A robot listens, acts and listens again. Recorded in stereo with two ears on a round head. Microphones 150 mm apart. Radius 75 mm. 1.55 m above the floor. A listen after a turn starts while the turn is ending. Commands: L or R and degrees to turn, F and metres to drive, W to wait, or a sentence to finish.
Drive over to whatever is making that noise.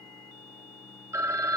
R20
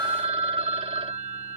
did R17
R145
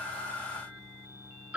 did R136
R10
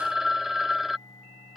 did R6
F1.0
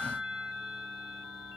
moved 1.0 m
F1.0
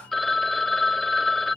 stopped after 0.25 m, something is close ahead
Arrived at the phone ringing, straight ahead.